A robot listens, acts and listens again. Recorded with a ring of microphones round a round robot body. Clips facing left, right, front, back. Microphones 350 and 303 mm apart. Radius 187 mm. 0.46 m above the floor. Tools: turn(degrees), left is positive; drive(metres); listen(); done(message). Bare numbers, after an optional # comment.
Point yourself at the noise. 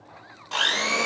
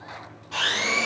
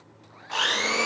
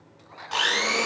# The blender: 120° left.
turn(120)
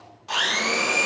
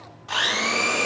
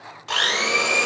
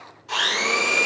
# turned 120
# The blender is now 10° left.
turn(10)
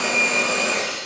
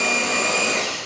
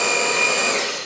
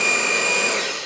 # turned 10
done("Facing the blender, under 1 m away.")